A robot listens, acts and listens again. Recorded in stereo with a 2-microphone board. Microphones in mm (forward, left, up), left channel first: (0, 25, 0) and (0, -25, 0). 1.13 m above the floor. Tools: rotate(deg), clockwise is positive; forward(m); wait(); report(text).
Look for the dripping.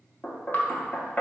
rotate(-40)
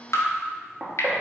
rotate(-90)
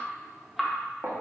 rotate(10)
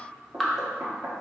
report("Facing the dripping, under 1 m away.")